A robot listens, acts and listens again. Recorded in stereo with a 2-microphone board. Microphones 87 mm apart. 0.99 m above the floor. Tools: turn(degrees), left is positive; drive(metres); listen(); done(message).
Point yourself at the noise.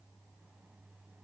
listen()
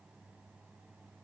listen()
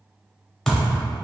turn(degrees=30)
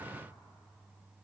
listen()
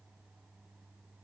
done("I heard a thud, but can't make it out now. It was about 20° right or 140° left.")